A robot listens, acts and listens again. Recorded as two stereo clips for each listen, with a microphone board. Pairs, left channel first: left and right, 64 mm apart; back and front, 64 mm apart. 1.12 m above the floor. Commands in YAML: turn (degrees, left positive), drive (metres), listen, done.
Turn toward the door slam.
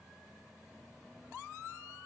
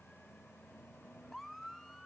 listen: true
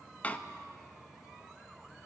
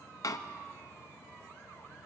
turn: 155
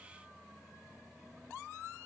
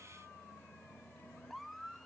done: "I heard a door slam from this way, but can't make it out now."